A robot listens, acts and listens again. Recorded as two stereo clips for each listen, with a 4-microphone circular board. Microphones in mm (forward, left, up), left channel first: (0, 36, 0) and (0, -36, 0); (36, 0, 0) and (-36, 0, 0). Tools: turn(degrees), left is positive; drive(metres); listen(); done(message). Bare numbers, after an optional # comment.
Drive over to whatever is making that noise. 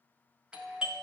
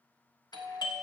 # The doorbell: 10° right.
turn(-10)
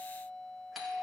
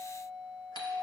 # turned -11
drive(1.0)
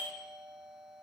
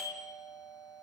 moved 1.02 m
drive(1.0)
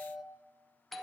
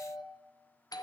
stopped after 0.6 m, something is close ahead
done("Arrived at the doorbell, straight ahead.")